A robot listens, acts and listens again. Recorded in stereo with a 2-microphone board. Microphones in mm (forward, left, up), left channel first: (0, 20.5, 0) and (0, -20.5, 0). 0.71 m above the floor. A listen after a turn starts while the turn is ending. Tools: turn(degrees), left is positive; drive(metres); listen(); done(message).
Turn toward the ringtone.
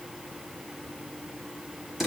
listen()
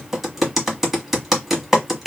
listen()
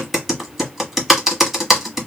done("I can't make out a ringtone, only typing on a keyboard.")